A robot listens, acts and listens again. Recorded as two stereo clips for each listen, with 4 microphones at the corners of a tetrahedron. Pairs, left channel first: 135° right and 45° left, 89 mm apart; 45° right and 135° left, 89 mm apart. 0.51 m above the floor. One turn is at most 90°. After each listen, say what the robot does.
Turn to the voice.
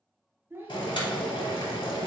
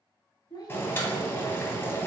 Turn 20° right.
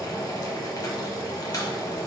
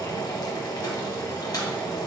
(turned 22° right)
Keep listening.
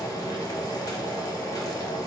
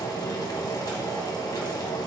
Keep listening.
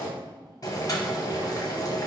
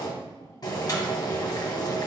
Facing where the child speaking came from. I can't hear it now.